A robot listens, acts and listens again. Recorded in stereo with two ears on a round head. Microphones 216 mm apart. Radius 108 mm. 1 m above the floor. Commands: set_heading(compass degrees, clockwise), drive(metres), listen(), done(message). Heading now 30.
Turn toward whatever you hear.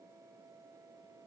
listen()
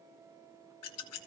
set_heading(320)
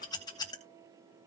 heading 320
set_heading(300)
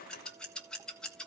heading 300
done("Found it: scissors, straight ahead.")